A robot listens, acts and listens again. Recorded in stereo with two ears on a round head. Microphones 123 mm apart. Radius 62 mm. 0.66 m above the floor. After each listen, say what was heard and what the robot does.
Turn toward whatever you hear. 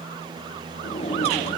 The drawer: about 45° left or 135° left. Turn 45° left.
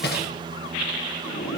So it is at 90° left. Turn 90° left.
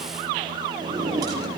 The drawer is now 25° right. Turn 25° right.
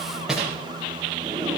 Facing the drawer, over 4 m away.